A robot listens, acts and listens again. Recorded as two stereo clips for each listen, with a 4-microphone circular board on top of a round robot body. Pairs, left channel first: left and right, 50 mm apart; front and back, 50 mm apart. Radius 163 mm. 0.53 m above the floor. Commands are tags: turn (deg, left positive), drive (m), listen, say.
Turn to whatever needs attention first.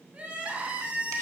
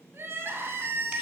<turn deg="-145"/>
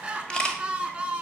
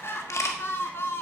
<turn deg="-20"/>
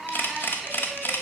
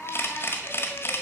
<say>Found it: crying, straight ahead.</say>